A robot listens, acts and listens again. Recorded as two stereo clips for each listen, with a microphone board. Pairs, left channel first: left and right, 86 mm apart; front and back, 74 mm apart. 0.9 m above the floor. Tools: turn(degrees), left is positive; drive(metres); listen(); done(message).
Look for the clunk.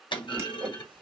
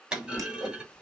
turn(degrees=100)
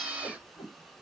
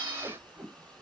done("I heard a clunk from this way, but can't make it out now.")